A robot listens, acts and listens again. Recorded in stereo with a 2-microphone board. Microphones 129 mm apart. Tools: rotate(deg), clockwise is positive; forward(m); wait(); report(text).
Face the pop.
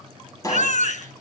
rotate(-25)
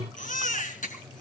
wait()
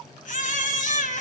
report("I heard a pop, but can't make it out now. It was about straight ahead or 130° left.")